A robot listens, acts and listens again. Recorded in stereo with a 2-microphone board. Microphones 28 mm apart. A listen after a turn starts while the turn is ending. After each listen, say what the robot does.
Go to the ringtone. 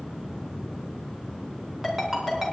Turn 30° right.
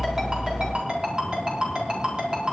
Turn 145° right.
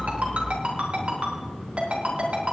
Turn 45° right.
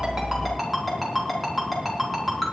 Drive 1.0 m forward.
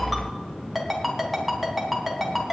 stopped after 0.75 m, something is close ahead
Something is in my way. I am facing the ringtone but have not reached it.